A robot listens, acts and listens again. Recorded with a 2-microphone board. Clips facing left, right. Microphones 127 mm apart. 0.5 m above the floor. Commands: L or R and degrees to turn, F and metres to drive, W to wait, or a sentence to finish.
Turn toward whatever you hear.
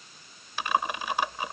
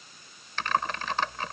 L30
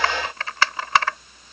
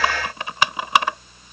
R20
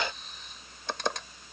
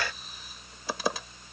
Found it: typing on a keyboard, straight ahead.